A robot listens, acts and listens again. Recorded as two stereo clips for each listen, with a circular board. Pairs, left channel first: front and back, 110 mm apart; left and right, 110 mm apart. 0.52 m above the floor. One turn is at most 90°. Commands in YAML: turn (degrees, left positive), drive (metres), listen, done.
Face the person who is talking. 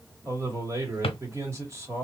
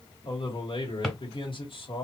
turn: 90
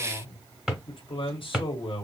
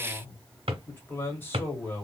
turn: 20
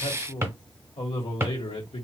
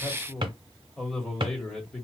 done: "Facing the man speaking."